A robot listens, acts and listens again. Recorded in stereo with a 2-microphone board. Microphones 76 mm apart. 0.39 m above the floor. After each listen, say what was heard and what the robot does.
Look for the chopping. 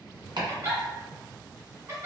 Turn 90° right.
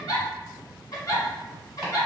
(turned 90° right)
Keep listening.
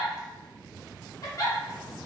Keep listening.
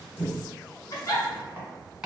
The chopping is now 10° right. Turn 10° right.
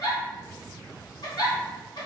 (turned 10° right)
Keep listening.
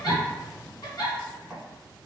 Facing the chopping.